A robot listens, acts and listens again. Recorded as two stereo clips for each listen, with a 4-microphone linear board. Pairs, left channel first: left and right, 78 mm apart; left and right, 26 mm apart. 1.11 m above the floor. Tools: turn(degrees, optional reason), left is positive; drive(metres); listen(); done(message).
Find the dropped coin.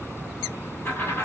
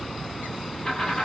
turn(degrees=30, reason="The dropped coin: about 30° left or 150° left.")
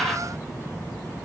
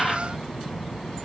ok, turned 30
done("Found it: a dropped coin, straight ahead, 1 to 2 m away.")